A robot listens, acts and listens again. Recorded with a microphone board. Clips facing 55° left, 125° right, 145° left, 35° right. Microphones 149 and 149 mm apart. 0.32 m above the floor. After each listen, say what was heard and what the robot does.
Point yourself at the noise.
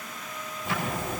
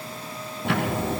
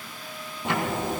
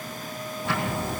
The ticking: 145° right. Turn 145° right.
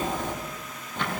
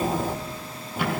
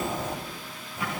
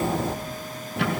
The ticking is now 45° right. Turn 45° right.
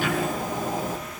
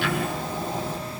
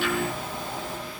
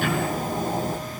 The ticking is now 10° left. Turn 10° left.
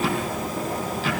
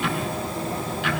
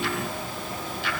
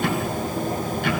Facing the ticking, 2 to 4 m away.